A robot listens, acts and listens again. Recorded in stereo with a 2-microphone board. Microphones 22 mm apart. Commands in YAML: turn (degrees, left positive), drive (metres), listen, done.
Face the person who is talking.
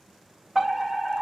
listen: true
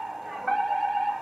listen: true
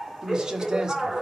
turn: -30
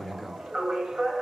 done: "Found it: a man speaking, straight ahead."